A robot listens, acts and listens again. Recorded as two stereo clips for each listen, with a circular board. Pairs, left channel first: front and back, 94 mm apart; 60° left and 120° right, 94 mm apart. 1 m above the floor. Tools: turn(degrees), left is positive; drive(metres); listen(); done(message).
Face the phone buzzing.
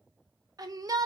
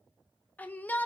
listen()
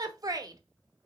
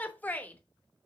listen()
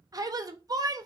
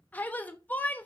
done("I can't make out a phone buzzing, only a shout.")